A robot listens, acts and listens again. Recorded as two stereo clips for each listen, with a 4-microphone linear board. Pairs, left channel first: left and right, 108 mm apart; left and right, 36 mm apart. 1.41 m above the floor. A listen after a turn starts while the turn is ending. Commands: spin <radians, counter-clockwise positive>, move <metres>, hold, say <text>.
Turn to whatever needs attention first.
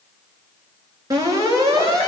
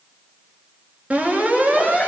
spin -0.61
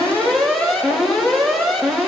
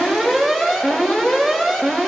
say Facing the alarm.